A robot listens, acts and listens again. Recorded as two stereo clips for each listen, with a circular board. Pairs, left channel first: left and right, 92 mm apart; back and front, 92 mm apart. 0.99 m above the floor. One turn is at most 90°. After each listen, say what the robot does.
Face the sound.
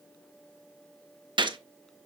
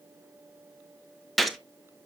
Turn 90° right.
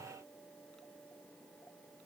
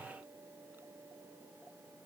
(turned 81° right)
Turn 10° right.
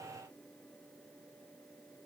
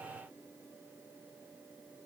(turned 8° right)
Facing where the gunshot came from. I can't hear it now.